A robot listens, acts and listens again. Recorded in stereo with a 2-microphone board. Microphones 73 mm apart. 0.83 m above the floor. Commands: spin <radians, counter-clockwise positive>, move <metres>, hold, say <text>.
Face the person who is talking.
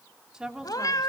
spin -0.52
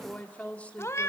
spin 0.35
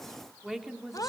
say Found it: a woman speaking, straight ahead.